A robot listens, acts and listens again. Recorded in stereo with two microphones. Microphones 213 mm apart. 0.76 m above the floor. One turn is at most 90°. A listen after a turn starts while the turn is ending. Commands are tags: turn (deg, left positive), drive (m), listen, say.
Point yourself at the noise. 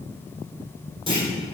<turn deg="-25"/>
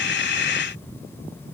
<listen/>
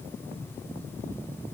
<say>I heard a clunk, but can't make it out now. It was about straight ahead or 130° right.</say>